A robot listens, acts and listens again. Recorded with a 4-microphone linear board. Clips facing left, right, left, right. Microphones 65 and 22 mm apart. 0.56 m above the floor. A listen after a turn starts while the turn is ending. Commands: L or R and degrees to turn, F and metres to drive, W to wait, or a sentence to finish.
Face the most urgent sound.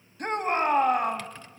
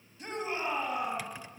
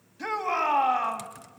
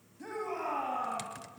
L55
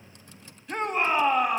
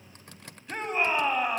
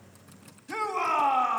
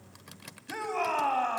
Found it: a shout, straight ahead.